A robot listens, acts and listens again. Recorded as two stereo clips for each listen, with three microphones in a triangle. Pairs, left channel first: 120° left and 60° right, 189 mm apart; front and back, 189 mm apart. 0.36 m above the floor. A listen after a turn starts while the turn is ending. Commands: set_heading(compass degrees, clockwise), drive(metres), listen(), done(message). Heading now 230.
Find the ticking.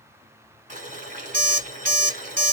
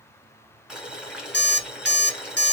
listen()
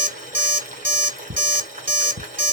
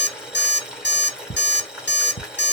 set_heading(285)
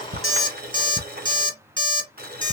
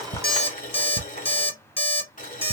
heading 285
done("Facing the ticking, 1 to 2 m away.")